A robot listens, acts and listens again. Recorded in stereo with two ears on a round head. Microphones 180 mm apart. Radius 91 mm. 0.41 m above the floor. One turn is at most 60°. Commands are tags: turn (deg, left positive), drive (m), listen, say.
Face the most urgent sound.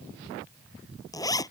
<listen/>
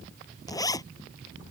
<listen/>
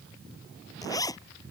<say>I can't make out anything urgent, only a zipper.</say>